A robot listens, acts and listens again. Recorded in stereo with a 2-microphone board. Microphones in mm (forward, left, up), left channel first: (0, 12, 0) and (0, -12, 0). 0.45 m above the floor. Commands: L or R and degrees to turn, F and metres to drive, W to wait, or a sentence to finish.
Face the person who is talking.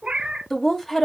L30
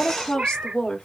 L135
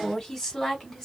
L20
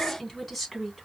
Found it: a woman speaking, straight ahead.